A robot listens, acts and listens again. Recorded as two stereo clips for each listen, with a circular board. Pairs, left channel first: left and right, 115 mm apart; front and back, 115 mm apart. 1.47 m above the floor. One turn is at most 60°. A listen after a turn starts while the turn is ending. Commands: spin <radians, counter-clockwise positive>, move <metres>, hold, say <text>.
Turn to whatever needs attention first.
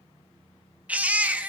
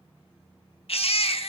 spin -0.26
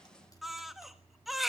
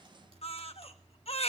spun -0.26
say Facing the baby crying, 1 to 2 m away.